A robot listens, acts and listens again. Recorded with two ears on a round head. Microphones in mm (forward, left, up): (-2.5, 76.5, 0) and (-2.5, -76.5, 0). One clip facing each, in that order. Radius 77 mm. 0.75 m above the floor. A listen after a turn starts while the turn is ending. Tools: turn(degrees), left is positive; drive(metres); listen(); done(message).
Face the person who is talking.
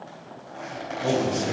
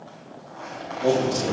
turn(degrees=-45)
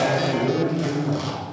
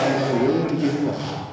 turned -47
turn(degrees=-75)
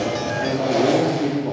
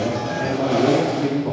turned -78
done("Found it: a man speaking, straight ahead, 1 to 2 m away.")